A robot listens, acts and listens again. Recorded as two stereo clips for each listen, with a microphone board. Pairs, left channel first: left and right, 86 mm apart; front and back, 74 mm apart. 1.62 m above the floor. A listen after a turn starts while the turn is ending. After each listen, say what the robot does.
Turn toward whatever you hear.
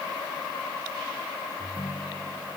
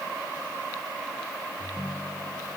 Turn 60° left.
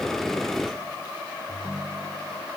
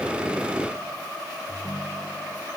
Found it: a ringtone, straight ahead.